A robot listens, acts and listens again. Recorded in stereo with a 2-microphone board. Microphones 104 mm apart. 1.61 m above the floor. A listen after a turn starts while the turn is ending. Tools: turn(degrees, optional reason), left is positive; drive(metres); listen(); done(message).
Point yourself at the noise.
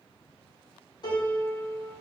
turn(degrees=45, reason="The piano: about 45° left or 135° left.")
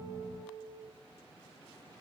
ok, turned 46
turn(degrees=90, reason="So it is at 90° left.")
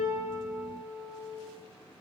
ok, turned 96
done("Facing the piano, 1 to 2 m away.")